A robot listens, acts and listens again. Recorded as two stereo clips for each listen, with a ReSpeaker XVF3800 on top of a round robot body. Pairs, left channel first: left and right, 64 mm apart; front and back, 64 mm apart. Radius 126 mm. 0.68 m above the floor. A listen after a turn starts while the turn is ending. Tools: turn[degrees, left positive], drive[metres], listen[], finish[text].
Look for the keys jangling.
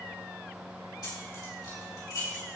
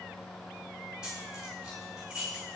Thought: The keys jangling: 105° left.
Action: turn[105]
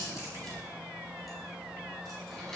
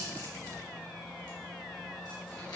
Action: listen[]
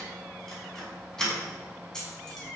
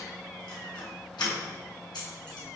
Thought: The keys jangling is now 10° left.
Action: turn[10]
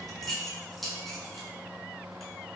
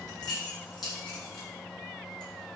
Action: finish[Found it: keys jangling, straight ahead, over 4 m away.]